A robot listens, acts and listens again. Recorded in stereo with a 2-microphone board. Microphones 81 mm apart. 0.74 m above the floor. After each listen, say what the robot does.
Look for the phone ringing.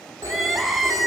Turn 45° right.
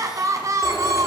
Keep listening.
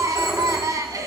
Facing the phone ringing.